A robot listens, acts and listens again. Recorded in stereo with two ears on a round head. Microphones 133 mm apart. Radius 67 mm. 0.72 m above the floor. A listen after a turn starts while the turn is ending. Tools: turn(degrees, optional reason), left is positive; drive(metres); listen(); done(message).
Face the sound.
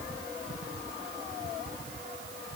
listen()
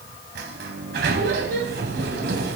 turn(degrees=-90)
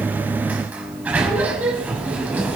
turn(degrees=-10, reason="So it is at 10° right.")
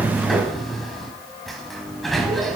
done("Facing the sliding door, 1 to 2 m away.")